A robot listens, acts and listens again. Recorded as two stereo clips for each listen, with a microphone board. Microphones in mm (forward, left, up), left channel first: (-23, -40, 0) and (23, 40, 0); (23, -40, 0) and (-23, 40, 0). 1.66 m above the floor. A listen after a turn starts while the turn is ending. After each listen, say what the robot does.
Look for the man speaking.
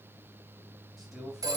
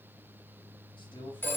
Turn 30° right.
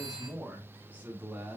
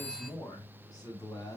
Turn 15° right.
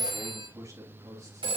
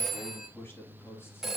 Found it: a man speaking, straight ahead.